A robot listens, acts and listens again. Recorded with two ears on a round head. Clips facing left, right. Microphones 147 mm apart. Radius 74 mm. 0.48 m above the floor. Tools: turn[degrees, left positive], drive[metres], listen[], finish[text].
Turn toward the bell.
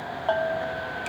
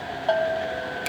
Thought: The bell: about 20° right or 160° right.
Action: turn[-20]
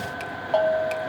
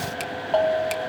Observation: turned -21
Action: finish[Found it: a bell, straight ahead, 1 to 2 m away.]